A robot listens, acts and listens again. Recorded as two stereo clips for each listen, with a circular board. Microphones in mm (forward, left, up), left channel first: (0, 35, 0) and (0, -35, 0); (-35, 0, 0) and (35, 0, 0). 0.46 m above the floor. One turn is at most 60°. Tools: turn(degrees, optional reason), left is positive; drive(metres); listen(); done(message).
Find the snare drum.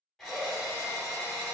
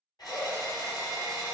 listen()
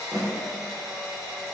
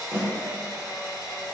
turn(degrees=60, reason="The snare drum: 140° left.")
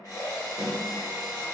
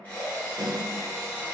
turn(degrees=60, reason="The snare drum is now 80° left.")
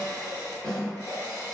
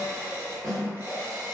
turn(degrees=15, reason="The snare drum is now 15° left.")
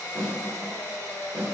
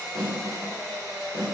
done("Facing the snare drum, 1 to 2 m away.")